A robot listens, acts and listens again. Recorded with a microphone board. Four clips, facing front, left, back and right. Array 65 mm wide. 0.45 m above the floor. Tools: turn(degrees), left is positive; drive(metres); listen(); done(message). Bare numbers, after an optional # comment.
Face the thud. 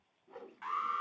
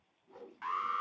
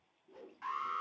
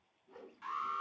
listen()
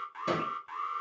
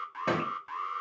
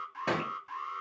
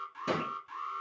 # The thud: 115° left.
turn(115)
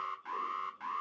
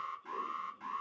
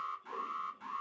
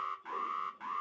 done("Facing where the thud came from. I can't hear it now.")